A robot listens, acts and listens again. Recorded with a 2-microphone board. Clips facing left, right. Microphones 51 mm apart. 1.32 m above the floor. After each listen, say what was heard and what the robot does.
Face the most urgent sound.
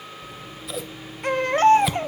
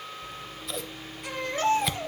The baby crying: about 45° left or 135° left. Turn 45° left.
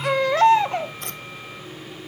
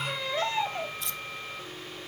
So it is at 90° left. Turn 90° left.
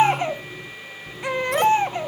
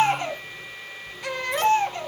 The baby crying is now 20° left. Turn 20° left.
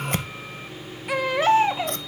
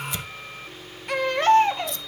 Found it: a baby crying, straight ahead.